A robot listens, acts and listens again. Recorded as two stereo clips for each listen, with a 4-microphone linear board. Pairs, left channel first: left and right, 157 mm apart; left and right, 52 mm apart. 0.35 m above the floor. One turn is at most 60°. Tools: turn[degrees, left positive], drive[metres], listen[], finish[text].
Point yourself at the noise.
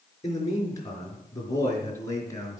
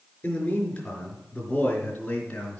Thought: The man speaking: about 20° left or 160° left.
Action: turn[20]
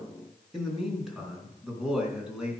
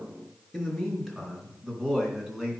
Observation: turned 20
Action: finish[Facing the man speaking.]